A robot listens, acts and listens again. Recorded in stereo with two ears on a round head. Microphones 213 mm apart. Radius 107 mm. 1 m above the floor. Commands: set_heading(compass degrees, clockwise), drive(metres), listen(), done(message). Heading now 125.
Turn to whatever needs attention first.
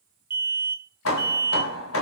set_heading(155)
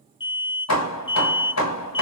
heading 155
set_heading(135)
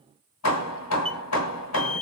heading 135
done("Facing the alarm.")